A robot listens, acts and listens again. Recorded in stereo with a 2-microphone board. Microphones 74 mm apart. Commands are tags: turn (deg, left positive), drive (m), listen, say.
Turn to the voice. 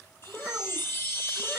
<turn deg="30"/>
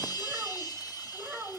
<turn deg="-20"/>
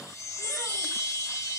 <listen/>
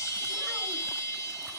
<listen/>
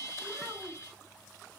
<say>Found it: a child speaking, straight ahead, 2 to 4 m away.</say>